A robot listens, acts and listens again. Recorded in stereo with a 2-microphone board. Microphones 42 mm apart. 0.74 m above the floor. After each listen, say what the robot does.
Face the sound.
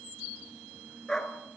Turn 30° left.
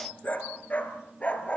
Turn 150° left.
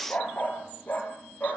Turn 45° left.
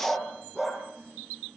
Facing the dog barking.